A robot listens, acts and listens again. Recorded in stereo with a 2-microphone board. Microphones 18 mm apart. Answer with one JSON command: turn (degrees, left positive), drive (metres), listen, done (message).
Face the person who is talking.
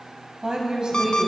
{"turn": -60}
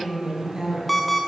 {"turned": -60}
{"turn": -40}
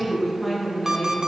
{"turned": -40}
{"done": "Facing the woman speaking."}